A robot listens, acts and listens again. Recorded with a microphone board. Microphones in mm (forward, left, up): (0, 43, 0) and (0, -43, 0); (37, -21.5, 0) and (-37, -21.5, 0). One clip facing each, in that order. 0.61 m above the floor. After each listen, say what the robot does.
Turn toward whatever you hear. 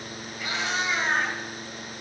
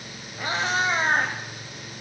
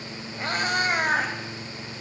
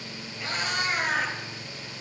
Turn 45° right.
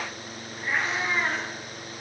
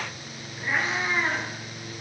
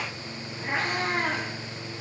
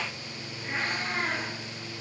Found it: a cat meowing, straight ahead.